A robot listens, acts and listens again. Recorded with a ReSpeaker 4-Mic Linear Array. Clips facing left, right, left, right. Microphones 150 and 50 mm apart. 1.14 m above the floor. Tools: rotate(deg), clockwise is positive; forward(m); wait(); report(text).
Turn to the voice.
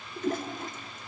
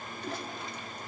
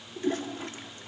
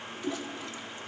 wait()
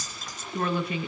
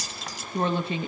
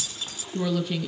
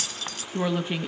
rotate(30)
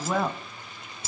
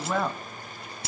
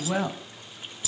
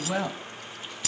report("Found it: a woman speaking, straight ahead, 1 to 2 m away.")